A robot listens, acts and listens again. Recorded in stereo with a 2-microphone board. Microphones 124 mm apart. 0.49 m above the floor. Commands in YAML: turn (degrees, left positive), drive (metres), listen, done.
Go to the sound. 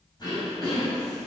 turn: 35
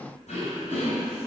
turn: 105
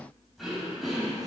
drive: 1.0
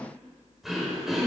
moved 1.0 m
drive: 1.0
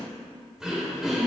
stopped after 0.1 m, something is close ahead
done: "Arrived at the throat clearing, straight ahead."